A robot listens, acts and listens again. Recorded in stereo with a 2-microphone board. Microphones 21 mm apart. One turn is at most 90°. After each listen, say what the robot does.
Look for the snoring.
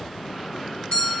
Keep listening.
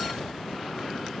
Keep listening.
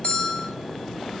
I can't make out snoring, only a bell.